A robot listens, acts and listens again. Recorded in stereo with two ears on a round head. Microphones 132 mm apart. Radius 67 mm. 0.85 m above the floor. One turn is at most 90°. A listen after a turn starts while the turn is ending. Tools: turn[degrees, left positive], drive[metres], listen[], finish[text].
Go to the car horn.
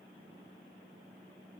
Action: listen[]
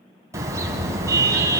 Thought: The car horn: about 20° right or 160° right.
Action: turn[-20]
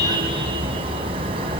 Thought: So it is at 140° right.
Action: turn[-90]
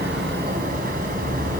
Thought: The car horn is now 60° right.
Action: turn[-60]
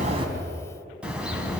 Action: drive[1.0]
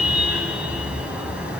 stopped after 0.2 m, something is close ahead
Thought: The car horn is now 10° right.
Action: turn[-10]
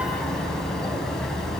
Action: finish[Something is in my way. I am facing the car horn but have not reached it.]